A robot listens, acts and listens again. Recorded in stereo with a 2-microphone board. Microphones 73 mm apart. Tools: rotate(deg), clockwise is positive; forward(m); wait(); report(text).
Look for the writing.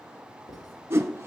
rotate(-70)
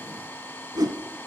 wait()
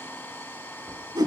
wait()
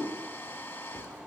rotate(-20)
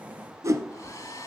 wait()
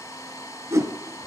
wait()
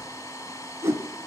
report("Facing where the writing came from. I can't hear it now.")